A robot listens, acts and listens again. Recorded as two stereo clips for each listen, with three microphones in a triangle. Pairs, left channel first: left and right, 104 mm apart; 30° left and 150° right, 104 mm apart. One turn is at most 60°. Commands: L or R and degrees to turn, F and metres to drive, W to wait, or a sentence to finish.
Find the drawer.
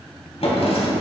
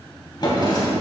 L60
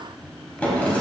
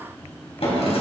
L15
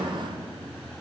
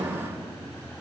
Found it: a drawer, straight ahead.